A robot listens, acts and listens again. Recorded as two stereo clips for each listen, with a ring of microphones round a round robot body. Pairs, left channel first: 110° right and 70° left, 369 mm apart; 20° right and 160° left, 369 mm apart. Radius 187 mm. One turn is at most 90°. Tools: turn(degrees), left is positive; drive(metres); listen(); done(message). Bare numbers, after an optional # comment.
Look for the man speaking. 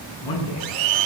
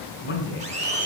# The man speaking: 85° right.
turn(-85)
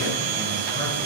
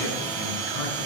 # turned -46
# Nothing new. It was at 40° right.
turn(-40)
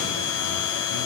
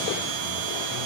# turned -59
# Nothing new. It was at 20° left.
turn(20)
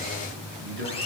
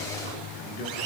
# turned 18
done("Facing the man speaking.")